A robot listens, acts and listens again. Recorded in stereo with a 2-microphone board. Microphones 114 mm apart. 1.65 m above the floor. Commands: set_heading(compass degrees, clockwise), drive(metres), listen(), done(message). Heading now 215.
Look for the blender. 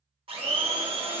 set_heading(270)
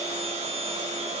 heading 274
set_heading(339)
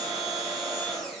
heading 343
done("Found it: a blender, straight ahead, 1 to 2 m away.")